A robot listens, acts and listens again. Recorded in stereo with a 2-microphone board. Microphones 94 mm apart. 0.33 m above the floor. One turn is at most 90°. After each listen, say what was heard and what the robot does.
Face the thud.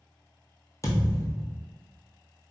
The thud: about 35° left or 145° left. Turn 35° left.
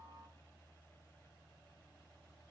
Keep listening.
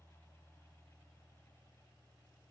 I heard a thud, but can't make it out now. It was about straight ahead or 110° left.